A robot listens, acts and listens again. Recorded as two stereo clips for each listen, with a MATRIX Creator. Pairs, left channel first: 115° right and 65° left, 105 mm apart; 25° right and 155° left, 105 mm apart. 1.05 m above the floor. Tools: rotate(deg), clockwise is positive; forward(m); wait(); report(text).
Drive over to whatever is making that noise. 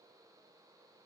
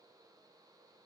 wait()
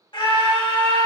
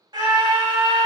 rotate(155)
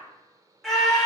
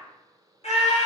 rotate(25)
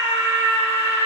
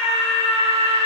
forward(1.0)
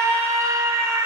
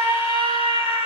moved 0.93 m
forward(1.0)
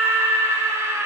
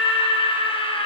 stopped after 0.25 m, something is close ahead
report("I am next to the scream.")